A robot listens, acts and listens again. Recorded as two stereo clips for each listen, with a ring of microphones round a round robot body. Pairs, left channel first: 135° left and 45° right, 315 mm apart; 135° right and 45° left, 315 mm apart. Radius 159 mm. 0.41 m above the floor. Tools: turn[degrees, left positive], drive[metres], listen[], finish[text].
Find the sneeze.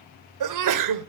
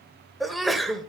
Thought: The sneeze: 45° right.
Action: turn[-45]
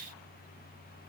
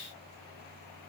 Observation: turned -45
Action: finish[Facing where the sneeze came from. I can't hear it now.]